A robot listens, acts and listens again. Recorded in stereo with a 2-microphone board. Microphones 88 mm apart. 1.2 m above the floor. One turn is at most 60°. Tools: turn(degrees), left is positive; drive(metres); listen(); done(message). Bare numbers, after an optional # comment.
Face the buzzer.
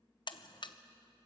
# The buzzer: about 60° left or 120° left.
turn(60)
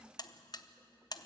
# So it is at 55° left.
turn(55)
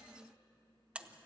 # The buzzer is now 15° right.
turn(-15)
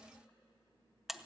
done("Found it: a buzzer, straight ahead, under 1 m away.")